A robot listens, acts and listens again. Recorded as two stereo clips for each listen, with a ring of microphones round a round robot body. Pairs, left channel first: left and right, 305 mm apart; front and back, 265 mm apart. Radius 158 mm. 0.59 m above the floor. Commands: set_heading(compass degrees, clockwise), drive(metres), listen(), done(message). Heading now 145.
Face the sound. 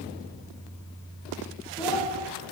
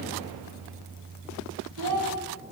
set_heading(335)
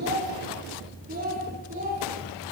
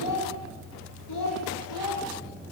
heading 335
set_heading(0)
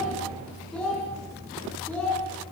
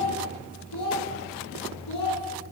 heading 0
done("Facing the child speaking, over 4 m away.")